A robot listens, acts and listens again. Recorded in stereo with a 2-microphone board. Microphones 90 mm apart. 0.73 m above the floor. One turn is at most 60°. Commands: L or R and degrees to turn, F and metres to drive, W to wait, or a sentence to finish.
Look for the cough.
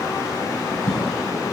L30
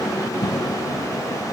L60
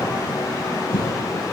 L60
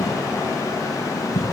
L35
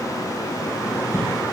R30
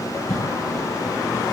Found it: a cough, straight ahead, over 4 m away.